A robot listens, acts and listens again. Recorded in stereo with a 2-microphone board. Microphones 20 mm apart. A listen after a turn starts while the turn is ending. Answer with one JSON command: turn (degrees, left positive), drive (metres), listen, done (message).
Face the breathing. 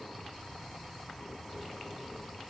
{"listen": true}
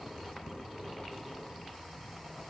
{"listen": true}
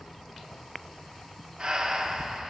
{"turn": -50}
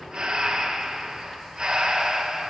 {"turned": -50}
{"turn": -65}
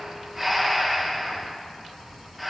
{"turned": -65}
{"done": "Facing the breathing."}